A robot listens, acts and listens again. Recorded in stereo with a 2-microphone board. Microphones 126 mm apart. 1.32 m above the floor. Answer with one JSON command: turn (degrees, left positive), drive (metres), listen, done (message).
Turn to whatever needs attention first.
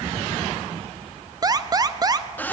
{"turn": -30}
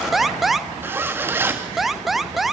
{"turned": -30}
{"done": "Found it: an alarm, straight ahead, 1 to 2 m away."}